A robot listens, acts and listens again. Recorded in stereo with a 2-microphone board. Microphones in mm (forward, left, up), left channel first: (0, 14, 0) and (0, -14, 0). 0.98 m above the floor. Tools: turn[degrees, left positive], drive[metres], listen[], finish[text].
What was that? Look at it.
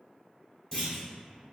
Thought: The clunk: about 20° left or 160° left.
Action: turn[20]
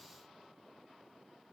Action: listen[]
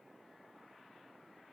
Action: finish[I heard a clunk, but can't make it out now. It was about straight ahead or 140° left.]